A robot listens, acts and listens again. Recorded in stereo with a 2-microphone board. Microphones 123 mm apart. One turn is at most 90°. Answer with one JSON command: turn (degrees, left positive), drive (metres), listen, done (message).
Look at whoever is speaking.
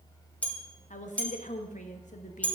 {"turn": 90}
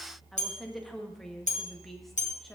{"done": "Facing the woman speaking."}